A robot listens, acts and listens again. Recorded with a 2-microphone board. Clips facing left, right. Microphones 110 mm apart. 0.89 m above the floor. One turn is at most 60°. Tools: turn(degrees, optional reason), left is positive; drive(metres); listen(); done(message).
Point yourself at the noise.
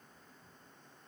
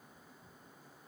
listen()
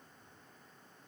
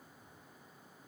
listen()
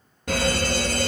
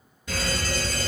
turn(degrees=55, reason="The fire alarm: about 55° left or 125° left.")
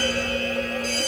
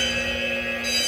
turn(degrees=45, reason="So it is at 45° left.")
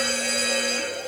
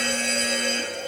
done("Facing the fire alarm.")